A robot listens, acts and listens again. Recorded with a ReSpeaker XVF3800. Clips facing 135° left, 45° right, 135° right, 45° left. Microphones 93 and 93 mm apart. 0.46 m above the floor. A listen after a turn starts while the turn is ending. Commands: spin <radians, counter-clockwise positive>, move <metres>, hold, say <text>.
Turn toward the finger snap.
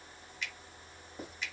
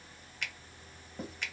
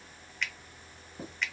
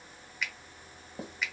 spin -0.70
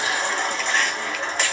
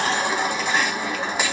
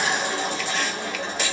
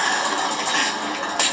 hold
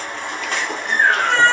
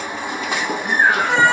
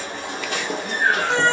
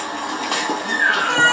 hold
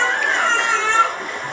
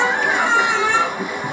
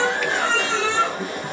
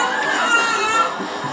say Facing where the finger snap came from. I can't hear it now.